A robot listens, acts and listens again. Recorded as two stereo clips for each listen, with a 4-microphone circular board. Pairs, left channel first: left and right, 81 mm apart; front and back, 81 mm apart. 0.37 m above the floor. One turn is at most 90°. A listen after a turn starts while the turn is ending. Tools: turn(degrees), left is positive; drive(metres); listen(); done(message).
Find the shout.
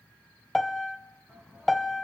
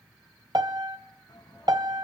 done("Facing the shout, 2 to 4 m away.")